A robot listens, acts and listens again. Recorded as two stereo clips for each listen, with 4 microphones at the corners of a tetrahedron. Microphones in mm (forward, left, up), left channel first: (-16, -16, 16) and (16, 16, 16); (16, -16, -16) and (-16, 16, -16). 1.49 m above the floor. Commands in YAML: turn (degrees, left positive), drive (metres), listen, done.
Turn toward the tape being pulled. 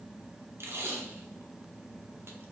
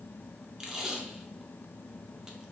turn: 65
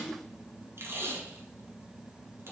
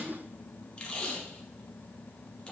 turn: 25
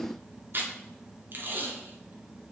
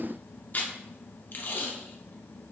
done: "Facing the tape being pulled, under 1 m away."